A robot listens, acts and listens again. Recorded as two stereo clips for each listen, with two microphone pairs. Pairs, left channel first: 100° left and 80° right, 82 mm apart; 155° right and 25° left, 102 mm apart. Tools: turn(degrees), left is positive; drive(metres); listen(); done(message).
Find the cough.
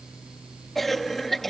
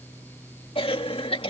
turn(degrees=-175)
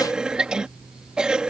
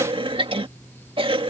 done("Facing the cough.")